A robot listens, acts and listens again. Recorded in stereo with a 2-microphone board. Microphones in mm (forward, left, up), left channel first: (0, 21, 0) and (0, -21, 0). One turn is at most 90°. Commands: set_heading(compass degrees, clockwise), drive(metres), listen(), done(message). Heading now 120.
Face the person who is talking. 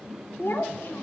set_heading(60)
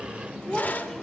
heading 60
done("Facing the child speaking, 2 to 4 m away.")